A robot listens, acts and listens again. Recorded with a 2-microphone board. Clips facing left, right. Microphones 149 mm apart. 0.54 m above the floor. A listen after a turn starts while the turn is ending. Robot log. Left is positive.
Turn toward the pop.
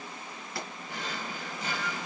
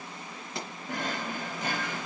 note: The pop: about 20° right or 160° right.
cmd yaw -20
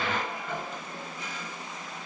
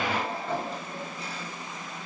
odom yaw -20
cmd idle
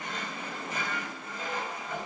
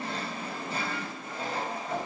end: I heard a pop, but can't make it out now. It was about straight ahead or 140° right.